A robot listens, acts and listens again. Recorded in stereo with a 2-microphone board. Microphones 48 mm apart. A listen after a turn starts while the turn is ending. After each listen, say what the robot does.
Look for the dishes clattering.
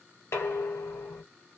Turn 60° left.
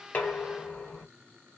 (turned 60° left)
Turn 10° left.
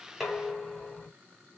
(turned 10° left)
Facing the dishes clattering.